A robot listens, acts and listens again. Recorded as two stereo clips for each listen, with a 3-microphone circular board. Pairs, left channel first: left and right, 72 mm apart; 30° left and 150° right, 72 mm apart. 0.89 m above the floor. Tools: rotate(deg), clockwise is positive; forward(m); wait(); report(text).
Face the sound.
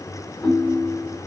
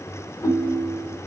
rotate(-45)
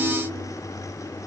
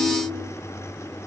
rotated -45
rotate(25)
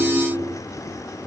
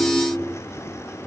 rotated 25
rotate(-10)
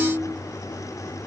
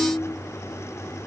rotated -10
report("Found it: a ringtone, straight ahead, 1 to 2 m away.")